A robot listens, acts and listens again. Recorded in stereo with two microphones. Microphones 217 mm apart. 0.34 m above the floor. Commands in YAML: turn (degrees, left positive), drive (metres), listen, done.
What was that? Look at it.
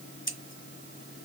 turn: 60
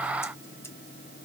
listen: true
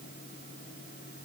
listen: true
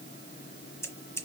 turn: 15
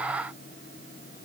listen: true
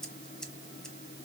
done: "Facing the scissors."